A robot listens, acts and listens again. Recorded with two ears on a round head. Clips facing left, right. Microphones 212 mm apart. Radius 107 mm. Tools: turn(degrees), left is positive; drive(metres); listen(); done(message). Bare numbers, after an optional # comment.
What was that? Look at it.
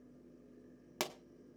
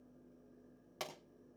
# The pop: about 70° left or 110° left.
turn(70)
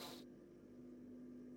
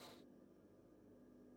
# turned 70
listen()
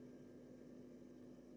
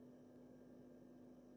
done("I heard a pop, but can't make it out now. It was about straight ahead or 40° left.")